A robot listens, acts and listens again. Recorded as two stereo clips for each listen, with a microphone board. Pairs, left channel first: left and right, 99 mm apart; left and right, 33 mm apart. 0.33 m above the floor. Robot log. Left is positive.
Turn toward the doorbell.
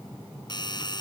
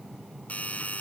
note: The doorbell: about 50° left or 130° left.
cmd yaw +50
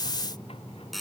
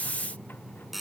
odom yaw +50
end: Found it: a doorbell, straight ahead.